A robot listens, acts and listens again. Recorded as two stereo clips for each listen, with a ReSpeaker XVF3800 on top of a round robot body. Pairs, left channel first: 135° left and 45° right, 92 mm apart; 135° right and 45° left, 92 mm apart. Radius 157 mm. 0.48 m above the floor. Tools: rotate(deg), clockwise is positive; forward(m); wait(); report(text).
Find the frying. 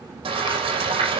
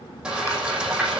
rotate(35)
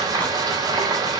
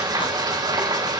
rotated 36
report("Found it: frying, straight ahead.")